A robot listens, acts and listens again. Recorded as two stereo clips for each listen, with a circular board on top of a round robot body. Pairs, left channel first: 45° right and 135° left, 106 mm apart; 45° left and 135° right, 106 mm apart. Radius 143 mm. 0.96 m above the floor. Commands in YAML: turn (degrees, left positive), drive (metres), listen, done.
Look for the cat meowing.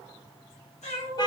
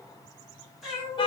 turn: -50
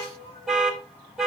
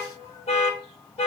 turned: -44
turn: -15
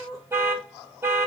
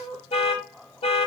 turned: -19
done: "Facing the cat meowing."